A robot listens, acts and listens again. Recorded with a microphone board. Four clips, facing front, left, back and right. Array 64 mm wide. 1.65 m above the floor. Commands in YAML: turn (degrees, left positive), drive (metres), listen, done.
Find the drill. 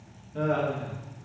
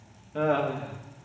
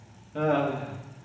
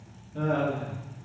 listen: true
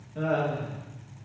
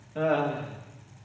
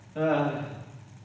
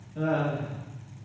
listen: true
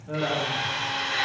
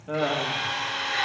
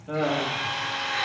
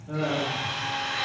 turn: 55
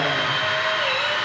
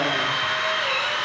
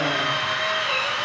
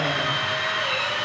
turn: 15
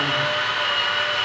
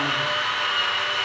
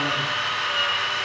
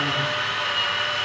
done: "Facing the drill."